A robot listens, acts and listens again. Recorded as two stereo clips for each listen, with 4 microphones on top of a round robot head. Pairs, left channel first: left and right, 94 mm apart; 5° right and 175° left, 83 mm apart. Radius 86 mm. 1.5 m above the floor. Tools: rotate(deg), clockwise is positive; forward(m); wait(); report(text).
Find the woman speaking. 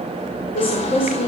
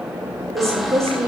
rotate(-115)
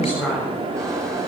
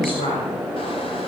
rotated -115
report("Facing the woman speaking, over 4 m away.")